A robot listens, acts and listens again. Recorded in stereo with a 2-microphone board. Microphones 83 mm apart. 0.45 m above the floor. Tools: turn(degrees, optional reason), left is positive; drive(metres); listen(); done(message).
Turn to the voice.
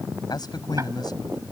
turn(degrees=60, reason="The man speaking: about 60° left or 120° left.")
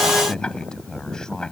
turn(degrees=10, reason="So it is at 10° left.")
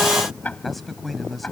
done("Facing the man speaking.")